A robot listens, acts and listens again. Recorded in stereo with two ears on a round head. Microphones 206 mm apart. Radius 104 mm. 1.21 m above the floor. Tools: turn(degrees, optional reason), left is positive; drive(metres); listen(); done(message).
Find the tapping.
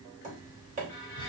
turn(degrees=-35, reason="The tapping: about 35° right or 145° right.")
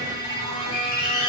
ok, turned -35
listen()
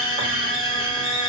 listen()
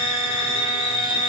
done("I heard tapping, but can't make it out now. It was about straight ahead or 110° right.")